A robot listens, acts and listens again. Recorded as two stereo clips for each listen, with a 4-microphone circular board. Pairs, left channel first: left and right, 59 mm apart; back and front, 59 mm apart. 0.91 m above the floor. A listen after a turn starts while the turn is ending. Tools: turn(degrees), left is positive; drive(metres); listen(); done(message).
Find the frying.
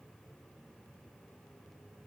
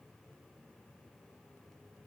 listen()
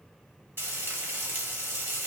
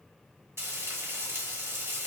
turn(degrees=-40)
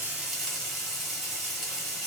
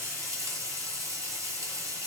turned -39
done("Facing the frying.")